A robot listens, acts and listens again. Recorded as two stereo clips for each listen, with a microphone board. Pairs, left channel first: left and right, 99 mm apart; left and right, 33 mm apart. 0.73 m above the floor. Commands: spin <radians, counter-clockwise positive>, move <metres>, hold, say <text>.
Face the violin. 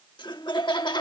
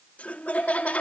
hold
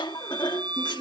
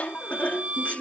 spin -0.87
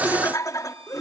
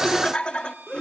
hold
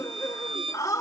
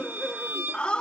spin -1.31
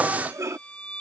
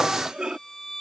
spin 0.17
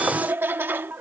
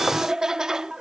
hold
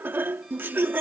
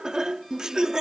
hold
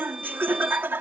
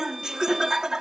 say Facing where the violin came from. I can't hear it now.